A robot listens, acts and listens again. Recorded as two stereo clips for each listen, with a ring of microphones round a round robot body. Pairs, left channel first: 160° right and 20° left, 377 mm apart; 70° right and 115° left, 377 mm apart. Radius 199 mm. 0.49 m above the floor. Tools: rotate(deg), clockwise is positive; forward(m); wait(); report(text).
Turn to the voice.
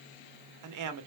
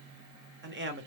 rotate(-55)
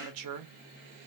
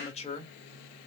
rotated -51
report("Facing the man speaking.")